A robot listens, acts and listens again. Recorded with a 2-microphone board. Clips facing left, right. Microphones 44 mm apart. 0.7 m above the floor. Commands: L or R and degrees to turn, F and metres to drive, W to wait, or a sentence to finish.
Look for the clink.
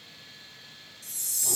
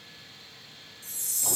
W
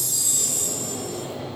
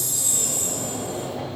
W
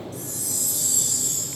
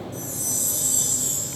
I can't make out a clink, only a chime and a sliding door.